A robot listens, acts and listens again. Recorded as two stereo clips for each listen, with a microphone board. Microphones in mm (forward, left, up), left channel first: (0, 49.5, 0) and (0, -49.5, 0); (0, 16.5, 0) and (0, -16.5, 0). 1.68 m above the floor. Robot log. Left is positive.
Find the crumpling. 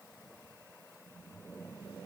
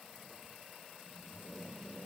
cmd idle
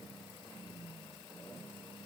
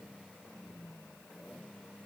cmd idle
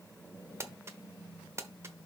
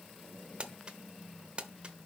note: The crumpling: about 30° right or 150° right.
cmd yaw -30
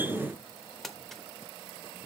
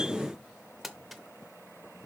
end: Found it: crumpling, straight ahead.